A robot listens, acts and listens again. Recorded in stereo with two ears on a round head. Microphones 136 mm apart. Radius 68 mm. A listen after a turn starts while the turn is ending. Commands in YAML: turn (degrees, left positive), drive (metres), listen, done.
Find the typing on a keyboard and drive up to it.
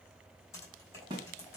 turn: 20
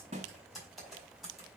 drive: 1.0
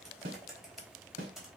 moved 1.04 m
drive: 1.0
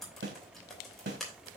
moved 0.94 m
drive: 1.0
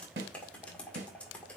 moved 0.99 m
turn: 10
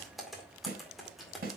drive: 1.0
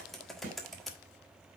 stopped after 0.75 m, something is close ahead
done: "I am next to the typing on a keyboard."